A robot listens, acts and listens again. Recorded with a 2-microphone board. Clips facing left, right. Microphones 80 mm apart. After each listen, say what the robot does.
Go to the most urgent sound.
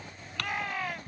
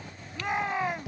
Turn 20° right.
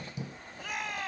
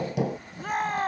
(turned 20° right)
Turn 135° right.
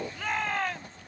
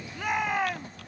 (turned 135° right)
Turn 10° right.
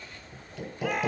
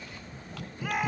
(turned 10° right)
Drive 1.0 m forward.
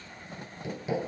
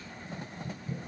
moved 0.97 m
Keep listening.
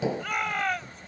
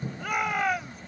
Turn 10° right.
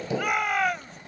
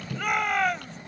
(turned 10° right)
Drive 1.0 m forward.
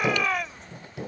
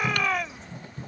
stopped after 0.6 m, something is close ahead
I am next to the shout.